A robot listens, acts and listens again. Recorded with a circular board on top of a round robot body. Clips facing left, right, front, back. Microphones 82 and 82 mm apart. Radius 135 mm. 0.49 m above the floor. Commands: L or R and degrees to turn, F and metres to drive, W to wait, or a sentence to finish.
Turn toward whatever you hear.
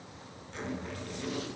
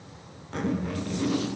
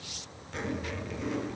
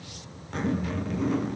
R130
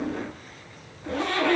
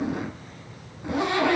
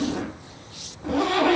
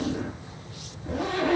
R15
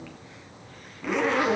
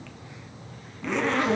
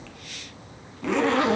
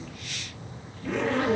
Found it: a zipper, straight ahead, 2 to 4 m away.